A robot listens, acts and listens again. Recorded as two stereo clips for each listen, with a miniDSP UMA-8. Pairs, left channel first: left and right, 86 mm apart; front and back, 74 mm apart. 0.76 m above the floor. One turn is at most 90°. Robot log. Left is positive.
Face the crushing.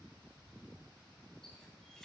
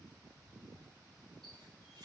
cmd idle
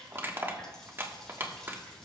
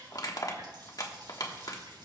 note: The crushing: 25° right.
cmd yaw -25
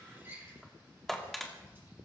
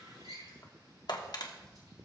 end: Found it: crushing, straight ahead.